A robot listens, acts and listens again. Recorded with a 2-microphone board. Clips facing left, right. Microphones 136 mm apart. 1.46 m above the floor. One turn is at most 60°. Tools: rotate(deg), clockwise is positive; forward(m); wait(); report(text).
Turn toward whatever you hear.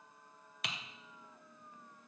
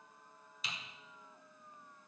rotate(-60)
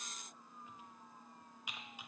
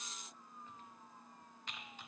rotate(-10)
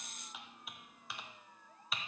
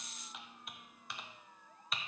report("Found it: typing on a keyboard, straight ahead, 1 to 2 m away.")